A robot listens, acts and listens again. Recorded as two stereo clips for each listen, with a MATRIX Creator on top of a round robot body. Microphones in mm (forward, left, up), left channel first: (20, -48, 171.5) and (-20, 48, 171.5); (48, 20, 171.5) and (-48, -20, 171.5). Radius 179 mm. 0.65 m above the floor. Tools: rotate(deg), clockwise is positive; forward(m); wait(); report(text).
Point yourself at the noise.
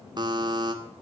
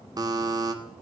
rotate(-155)
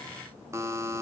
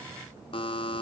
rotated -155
rotate(-50)
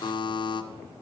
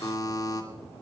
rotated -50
rotate(30)
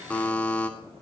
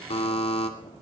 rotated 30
rotate(-10)
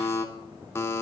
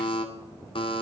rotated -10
report("Facing the buzzer, 2 to 4 m away.")